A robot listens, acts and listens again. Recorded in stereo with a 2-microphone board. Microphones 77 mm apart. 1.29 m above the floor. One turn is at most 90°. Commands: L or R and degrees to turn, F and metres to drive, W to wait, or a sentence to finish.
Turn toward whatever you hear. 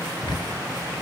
L70
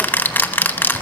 L25
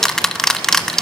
Found it: ticking, straight ahead.